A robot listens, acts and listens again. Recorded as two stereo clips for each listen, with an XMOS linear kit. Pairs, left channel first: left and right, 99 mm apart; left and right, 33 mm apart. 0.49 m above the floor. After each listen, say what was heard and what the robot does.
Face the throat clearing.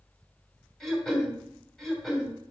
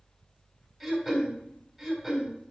Turn 30° left.
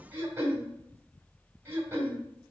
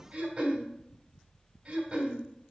So it is at 25° right. Turn 25° right.
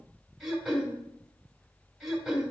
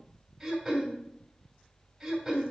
Found it: throat clearing, straight ahead.